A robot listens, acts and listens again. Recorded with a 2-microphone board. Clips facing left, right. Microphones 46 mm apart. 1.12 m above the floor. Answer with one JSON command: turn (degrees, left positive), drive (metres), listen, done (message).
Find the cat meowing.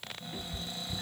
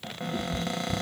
{"turn": 15}
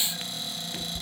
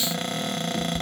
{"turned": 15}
{"turn": 150}
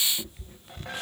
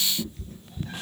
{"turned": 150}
{"turn": 25}
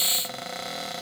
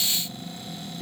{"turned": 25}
{"listen": true}
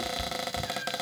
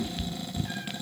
{"done": "Facing the cat meowing, 2 to 4 m away."}